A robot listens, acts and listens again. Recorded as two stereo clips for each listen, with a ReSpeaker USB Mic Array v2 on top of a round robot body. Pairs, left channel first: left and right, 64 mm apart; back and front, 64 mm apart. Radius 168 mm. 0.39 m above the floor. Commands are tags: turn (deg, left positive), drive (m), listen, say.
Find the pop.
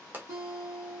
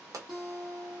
<turn deg="-30"/>
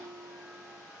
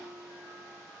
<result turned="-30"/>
<say>I heard a pop from this way, but can't make it out now.</say>